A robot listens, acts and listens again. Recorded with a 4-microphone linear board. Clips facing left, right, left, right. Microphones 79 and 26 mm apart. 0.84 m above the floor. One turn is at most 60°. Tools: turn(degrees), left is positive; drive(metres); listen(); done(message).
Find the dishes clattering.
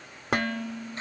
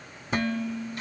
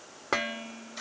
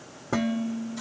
turn(degrees=60)
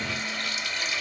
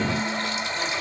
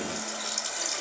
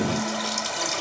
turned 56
listen()
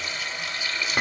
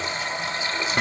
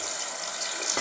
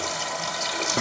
turn(degrees=10)
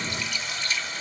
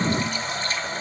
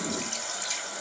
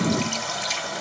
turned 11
listen()
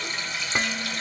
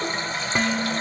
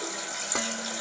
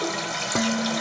done("Found it: dishes clattering, straight ahead.")